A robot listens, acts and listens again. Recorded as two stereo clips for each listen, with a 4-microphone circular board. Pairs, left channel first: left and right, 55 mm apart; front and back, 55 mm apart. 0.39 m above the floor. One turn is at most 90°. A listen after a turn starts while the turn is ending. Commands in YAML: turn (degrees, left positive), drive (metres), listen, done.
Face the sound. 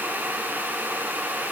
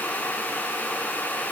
listen: true
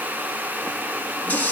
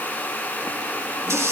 turn: 90
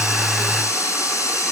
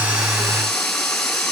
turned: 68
turn: 85
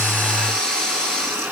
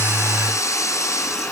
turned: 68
turn: 15
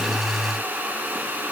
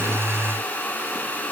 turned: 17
listen: true
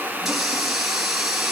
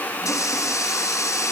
done: "Found it: a running tap, straight ahead."